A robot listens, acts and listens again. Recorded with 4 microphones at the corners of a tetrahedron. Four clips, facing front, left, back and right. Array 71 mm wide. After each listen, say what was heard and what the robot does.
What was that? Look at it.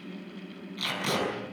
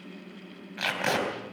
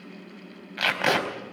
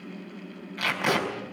The tape being pulled: 175° left. Turn 175° left.
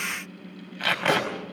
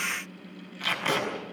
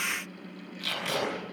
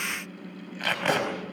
The tape being pulled is now 30° right. Turn 30° right.
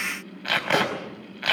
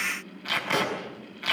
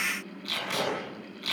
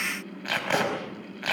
The tape being pulled is now 20° right. Turn 20° right.
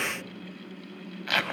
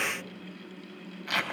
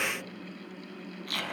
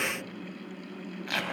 Found it: tape being pulled, straight ahead.